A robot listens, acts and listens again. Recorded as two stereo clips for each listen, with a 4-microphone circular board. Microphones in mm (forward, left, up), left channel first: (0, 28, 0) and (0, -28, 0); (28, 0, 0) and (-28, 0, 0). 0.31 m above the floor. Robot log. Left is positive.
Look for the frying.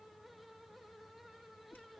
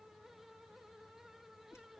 cmd idle
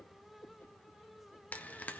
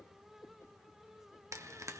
note: The frying: 150° left.
cmd yaw +150
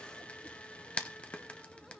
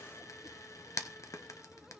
note: The frying is now 20° left.
cmd yaw +20
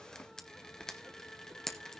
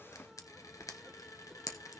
note: The frying is now 10° left.
cmd yaw +10
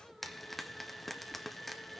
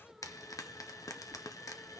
end: Facing the frying.